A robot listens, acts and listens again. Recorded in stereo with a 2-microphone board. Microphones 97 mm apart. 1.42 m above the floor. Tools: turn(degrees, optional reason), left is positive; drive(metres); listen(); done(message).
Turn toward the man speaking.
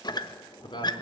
turn(degrees=60, reason="The man speaking: about 60° left or 120° left.")
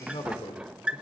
turn(degrees=70, reason="So it is at 70° left.")
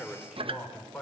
done("Found it: a man speaking, straight ahead, over 4 m away.")